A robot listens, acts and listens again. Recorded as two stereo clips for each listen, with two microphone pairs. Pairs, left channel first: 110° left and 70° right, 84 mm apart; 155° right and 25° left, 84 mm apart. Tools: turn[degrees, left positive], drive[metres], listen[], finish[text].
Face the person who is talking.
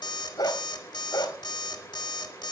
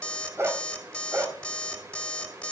Action: listen[]
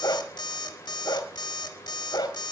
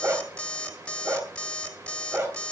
Action: listen[]
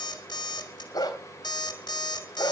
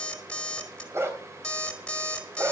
Action: finish[I can't make out anyone speaking, only a dog barking and an alarm clock.]